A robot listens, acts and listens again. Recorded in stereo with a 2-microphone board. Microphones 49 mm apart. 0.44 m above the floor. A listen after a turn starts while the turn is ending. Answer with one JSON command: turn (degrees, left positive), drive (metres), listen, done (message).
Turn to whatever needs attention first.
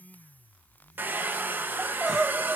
{"turn": -30}
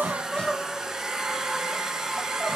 {"turn": 20}
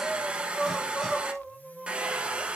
{"done": "Facing the crying."}